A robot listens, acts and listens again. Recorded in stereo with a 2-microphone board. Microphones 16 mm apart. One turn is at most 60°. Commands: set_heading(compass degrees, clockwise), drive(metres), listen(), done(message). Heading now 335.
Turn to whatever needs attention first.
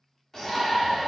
set_heading(300)
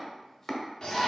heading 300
set_heading(240)
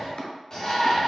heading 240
set_heading(190)
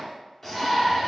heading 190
set_heading(175)
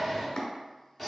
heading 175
done("Facing the shout.")